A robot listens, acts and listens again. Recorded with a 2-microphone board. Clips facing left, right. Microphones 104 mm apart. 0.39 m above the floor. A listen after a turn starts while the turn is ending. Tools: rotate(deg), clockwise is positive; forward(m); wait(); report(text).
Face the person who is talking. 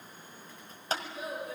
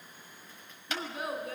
rotate(65)
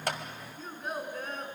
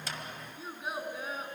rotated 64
report("Found it: a child speaking, straight ahead, 2 to 4 m away.")